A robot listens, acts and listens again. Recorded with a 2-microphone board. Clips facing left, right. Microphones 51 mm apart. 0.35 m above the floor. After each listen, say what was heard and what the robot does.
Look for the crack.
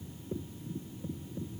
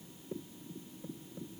Keep listening.
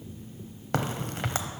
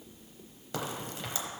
The crack: about 60° left or 120° left. Turn 60° left.
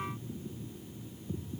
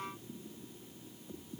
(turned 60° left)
Keep listening.
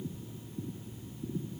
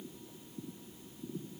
I heard a crack, but can't make it out now. It was about straight ahead or 60° left.